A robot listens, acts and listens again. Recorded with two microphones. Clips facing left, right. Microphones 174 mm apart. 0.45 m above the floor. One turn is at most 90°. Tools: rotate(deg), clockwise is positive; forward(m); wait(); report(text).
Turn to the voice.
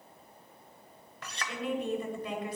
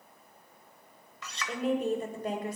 rotate(45)
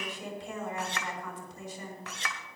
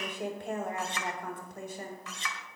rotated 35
rotate(90)
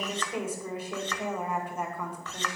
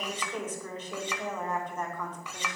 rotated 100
rotate(-10)
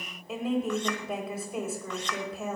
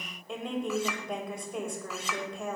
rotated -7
report("Facing the woman speaking, 2 to 4 m away.")